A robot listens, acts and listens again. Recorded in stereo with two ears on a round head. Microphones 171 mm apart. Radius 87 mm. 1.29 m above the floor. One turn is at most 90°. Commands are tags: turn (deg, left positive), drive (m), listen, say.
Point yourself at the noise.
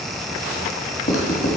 <turn deg="40"/>
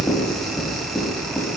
<say>Found it: writing, straight ahead, 1 to 2 m away.</say>